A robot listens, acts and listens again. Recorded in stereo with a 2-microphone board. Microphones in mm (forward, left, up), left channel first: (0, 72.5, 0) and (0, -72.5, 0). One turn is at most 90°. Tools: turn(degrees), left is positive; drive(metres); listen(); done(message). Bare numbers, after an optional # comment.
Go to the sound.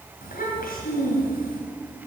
turn(90)
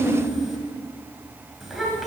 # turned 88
drive(1.0)
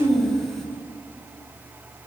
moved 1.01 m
drive(1.0)
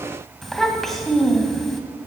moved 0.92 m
drive(1.0)
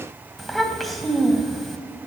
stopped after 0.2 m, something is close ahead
done("Arrived at the child speaking, straight ahead.")